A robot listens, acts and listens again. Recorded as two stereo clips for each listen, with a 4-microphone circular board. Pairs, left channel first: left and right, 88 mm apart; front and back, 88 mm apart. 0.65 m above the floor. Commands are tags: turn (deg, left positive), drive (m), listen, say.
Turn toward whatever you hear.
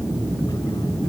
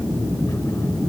<listen/>
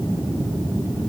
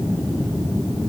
<listen/>
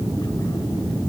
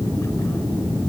<say>I can't make out anything to turn to.</say>